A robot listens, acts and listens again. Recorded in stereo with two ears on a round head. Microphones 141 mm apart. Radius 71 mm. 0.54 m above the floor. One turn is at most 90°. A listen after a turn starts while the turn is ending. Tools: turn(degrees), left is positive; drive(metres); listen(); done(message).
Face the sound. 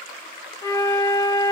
turn(degrees=25)
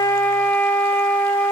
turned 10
turn(degrees=10)
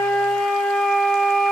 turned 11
done("Found it: a flute, straight ahead, under 1 m away.")